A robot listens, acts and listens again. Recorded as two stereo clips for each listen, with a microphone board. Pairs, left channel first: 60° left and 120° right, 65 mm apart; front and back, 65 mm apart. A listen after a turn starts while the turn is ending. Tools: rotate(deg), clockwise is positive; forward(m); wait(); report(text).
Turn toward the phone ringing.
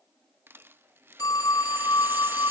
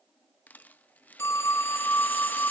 rotate(-45)
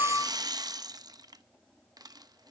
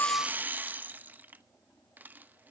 wait()
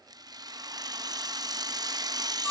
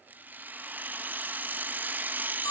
rotate(10)
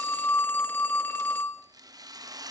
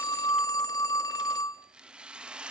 report("Facing the phone ringing, 1 to 2 m away.")